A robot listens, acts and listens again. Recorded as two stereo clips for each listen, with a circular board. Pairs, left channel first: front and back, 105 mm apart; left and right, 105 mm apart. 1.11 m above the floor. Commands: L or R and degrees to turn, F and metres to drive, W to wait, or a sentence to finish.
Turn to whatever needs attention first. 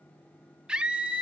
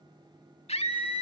L100
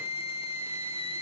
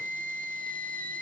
L20
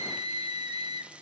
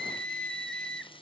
Found it: a scream, straight ahead, 2 to 4 m away.